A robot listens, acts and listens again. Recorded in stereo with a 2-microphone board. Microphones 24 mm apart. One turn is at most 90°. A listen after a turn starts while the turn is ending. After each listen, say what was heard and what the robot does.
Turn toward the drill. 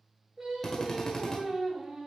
The drill: about 30° left or 150° left. Turn 30° left.
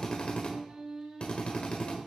So it is at 120° left. Turn 90° left.
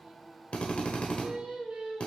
The drill is now 55° left. Turn 55° left.
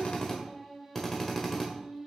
The drill is now 10° left. Turn 10° left.
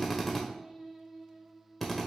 Found it: a drill, straight ahead, 1 to 2 m away.